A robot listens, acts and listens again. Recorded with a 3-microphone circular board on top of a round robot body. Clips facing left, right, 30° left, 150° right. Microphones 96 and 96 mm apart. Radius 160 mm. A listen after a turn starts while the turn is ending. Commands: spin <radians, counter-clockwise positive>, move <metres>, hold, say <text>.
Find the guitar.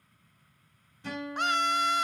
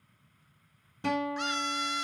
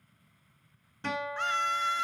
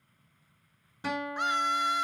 spin -1.22
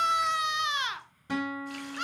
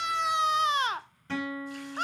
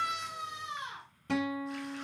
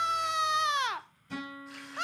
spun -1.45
spin 0.26
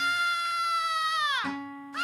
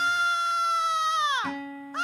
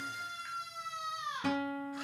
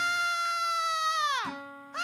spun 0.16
say Found it: a guitar, straight ahead.